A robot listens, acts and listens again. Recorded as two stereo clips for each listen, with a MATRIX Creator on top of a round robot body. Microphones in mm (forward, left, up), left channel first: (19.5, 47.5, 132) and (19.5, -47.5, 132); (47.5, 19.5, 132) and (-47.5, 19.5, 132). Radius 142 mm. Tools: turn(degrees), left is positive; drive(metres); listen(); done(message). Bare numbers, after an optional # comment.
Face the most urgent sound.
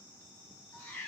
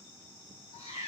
listen()
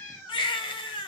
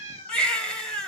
# The baby crying: 80° left.
turn(80)
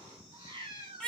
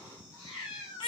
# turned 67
# The baby crying is now 15° left.
turn(15)
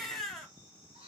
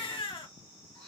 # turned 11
done("Found it: a baby crying, straight ahead.")